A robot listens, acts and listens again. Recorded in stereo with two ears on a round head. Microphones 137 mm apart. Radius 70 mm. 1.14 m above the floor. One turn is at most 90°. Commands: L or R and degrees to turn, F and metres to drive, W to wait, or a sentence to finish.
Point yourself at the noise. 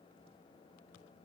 W
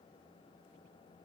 W
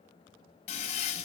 L50
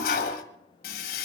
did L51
L75
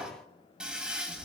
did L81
Facing the toilet flushing.